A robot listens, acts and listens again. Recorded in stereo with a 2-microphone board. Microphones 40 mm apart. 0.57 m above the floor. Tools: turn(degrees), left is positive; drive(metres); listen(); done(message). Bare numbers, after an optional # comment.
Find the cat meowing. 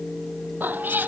# The cat meowing: about 50° right or 130° right.
turn(-50)
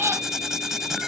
# So it is at 90° right.
turn(-90)
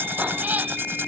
# The cat meowing is now 40° right.
turn(-40)
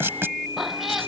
done("Facing the cat meowing.")